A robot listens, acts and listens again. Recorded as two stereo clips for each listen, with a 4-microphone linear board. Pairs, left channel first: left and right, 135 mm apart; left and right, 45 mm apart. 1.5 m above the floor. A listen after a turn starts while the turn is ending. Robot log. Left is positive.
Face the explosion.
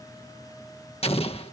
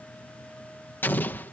note: The explosion: about 45° left or 135° left.
cmd yaw +45
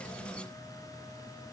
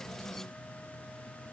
cmd idle
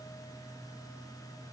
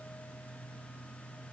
end: I heard an explosion, but can't make it out now. It was about straight ahead or 90° left.